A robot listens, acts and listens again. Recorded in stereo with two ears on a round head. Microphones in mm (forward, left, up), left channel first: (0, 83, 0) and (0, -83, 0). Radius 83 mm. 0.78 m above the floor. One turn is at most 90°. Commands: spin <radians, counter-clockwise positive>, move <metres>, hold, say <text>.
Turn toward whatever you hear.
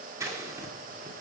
spin -0.26
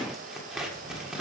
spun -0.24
say Facing the scissors.